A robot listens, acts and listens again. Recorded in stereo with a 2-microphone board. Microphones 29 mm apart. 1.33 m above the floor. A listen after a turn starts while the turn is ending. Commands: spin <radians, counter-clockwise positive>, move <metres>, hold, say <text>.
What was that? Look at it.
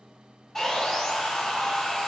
spin 0.35
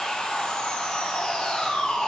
spin 2.36
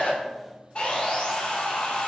spin 0.70
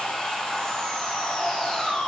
spin 0.35
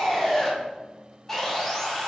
say Found it: sawing, straight ahead, 2 to 4 m away.